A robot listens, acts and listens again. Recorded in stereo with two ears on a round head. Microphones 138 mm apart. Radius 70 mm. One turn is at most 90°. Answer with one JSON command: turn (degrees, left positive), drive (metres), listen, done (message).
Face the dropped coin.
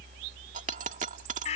{"turn": -55}
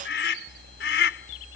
{"listen": true}
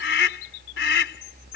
{"done": "I heard a dropped coin, but can't make it out now. It was about straight ahead or 70° right."}